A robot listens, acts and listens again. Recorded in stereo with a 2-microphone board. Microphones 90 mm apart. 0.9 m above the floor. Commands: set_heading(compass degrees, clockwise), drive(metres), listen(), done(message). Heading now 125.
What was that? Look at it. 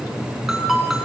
set_heading(155)
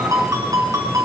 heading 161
set_heading(301)
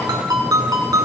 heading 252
set_heading(302)
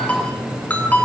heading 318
set_heading(303)
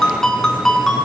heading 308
done("Facing the ringtone.")